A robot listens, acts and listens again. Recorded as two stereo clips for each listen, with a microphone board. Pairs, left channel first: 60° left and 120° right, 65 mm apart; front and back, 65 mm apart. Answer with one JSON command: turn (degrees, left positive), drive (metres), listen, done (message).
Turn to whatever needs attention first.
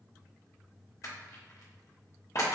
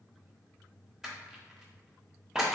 {"listen": true}
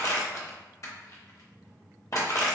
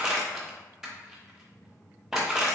{"listen": true}
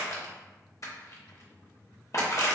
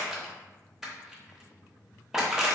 {"done": "I can't make out anything urgent, only crushing."}